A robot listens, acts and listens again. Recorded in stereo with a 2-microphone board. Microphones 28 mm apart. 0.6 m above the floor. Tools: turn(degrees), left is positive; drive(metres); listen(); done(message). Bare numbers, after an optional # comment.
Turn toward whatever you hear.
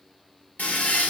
# The toilet flushing: about 70° left or 110° left.
turn(70)
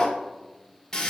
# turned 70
# So it is at 30° left.
turn(30)
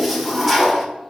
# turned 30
done("Facing the toilet flushing.")